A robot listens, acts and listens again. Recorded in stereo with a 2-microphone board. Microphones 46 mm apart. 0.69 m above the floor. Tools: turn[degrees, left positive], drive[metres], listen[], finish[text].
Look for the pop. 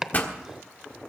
Thought: The pop: about 40° left or 140° left.
Action: turn[40]
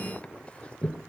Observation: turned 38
Action: listen[]
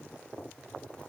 Action: finish[I heard a pop, but can't make it out now. It was about straight ahead or 100° left.]